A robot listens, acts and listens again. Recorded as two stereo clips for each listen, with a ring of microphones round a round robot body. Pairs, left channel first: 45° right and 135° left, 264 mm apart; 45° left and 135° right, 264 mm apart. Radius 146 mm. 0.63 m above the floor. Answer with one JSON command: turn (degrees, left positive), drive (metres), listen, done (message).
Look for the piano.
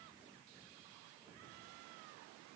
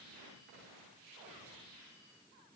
{"listen": true}
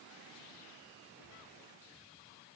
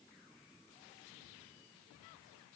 {"listen": true}
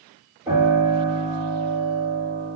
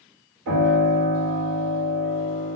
{"turn": -150}
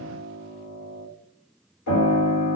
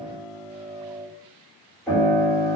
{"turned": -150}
{"turn": -40}
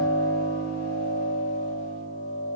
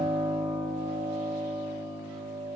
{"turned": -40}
{"turn": 15}
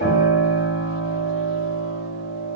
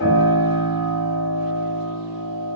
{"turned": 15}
{"done": "Found it: a piano, straight ahead, 1 to 2 m away."}